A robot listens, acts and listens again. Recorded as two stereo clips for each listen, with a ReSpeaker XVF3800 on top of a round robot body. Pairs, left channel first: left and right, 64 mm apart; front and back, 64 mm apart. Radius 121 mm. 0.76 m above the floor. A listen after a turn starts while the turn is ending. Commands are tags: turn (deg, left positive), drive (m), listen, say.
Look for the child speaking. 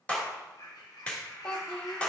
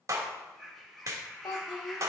<turn deg="15"/>
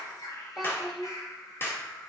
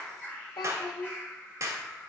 <say>Found it: a child speaking, straight ahead.</say>